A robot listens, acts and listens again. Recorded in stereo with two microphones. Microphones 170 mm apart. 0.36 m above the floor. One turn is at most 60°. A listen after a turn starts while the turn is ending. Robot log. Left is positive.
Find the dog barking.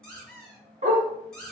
note: The dog barking: about 45° right or 135° right.
cmd yaw -45
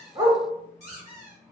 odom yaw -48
cmd idle
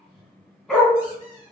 end: Found it: a dog barking, straight ahead, under 1 m away.